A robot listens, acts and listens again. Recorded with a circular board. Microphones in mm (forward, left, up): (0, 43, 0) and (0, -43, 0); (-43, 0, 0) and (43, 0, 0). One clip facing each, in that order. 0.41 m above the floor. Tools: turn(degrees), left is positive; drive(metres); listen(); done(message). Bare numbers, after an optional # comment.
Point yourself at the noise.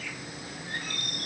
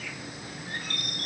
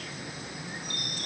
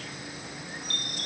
# The chime: 105° right.
turn(-105)
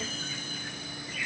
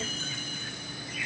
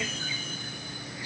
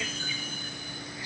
listen()
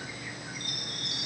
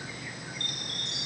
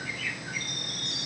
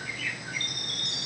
# The chime is now 10° left.
turn(10)
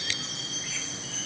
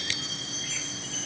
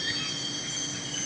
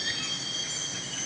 done("Facing the chime, 1 to 2 m away.")